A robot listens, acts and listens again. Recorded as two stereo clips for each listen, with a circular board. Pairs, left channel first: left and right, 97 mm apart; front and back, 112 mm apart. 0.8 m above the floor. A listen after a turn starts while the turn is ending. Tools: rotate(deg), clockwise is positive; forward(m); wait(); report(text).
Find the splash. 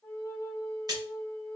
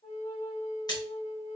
rotate(50)
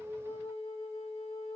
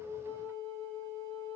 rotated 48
report("Facing where the splash came from. I can't hear it now.")